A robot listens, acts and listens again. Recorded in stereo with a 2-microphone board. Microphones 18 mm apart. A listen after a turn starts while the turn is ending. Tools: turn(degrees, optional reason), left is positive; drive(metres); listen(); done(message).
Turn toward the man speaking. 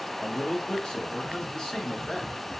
turn(degrees=55, reason="The man speaking: about 55° left or 125° left.")
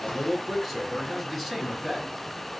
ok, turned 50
turn(degrees=10, reason="So it is at 10° left.")
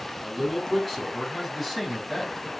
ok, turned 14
turn(degrees=10, reason="The man speaking is now 10° left.")
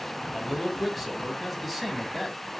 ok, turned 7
done("Found it: a man speaking, straight ahead, 2 to 4 m away.")